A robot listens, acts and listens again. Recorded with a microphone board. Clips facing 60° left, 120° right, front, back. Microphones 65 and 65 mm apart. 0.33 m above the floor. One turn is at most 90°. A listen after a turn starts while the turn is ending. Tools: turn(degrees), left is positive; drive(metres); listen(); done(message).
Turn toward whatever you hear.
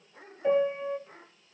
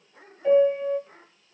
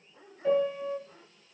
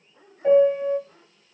turn(degrees=90)
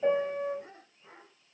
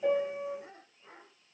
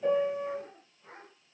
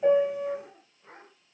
turn(degrees=60)
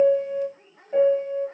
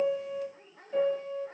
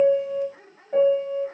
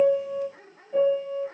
turn(degrees=10)
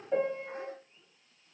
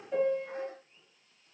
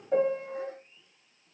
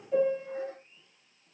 done("Found it: a piano, straight ahead, under 1 m away.")